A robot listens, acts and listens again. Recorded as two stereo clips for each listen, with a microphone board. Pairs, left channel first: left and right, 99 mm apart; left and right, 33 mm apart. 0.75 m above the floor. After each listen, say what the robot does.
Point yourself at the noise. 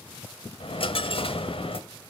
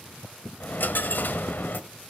Turn 65° left.
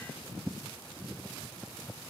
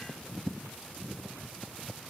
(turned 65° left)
Keep listening.
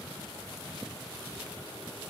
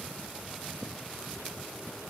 I heard a dropped coin, but can't make it out now. It was about straight ahead or 50° left.